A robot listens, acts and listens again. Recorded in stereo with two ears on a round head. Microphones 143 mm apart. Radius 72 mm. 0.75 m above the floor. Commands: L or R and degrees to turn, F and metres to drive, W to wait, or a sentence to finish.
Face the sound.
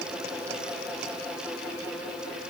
W
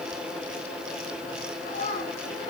L45
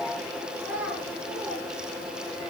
Found it: a child speaking, straight ahead, over 4 m away.